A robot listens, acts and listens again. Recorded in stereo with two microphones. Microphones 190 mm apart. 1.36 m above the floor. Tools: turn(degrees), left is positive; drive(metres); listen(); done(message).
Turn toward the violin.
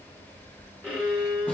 turn(degrees=30)
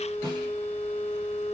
turn(degrees=150)
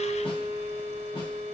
turn(degrees=-35)
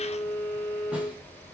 done("Facing the violin, 1 to 2 m away.")